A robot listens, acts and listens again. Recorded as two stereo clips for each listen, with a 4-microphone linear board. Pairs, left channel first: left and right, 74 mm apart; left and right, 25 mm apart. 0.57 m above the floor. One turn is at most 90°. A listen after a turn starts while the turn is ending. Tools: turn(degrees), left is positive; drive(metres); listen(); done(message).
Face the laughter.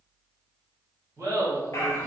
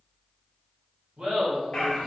turn(degrees=-45)
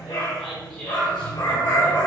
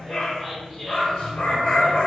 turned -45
listen()
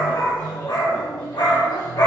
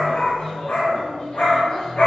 listen()
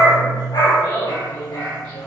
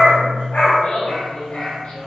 turn(degrees=60)
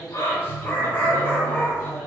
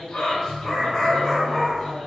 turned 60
listen()
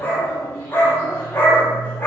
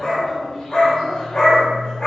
listen()
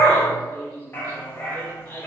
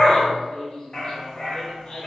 turn(degrees=20)
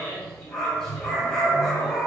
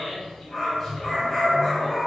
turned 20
listen()
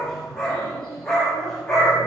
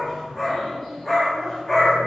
listen()
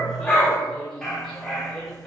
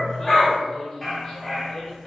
done("Facing where the laughter came from. I can't hear it now.")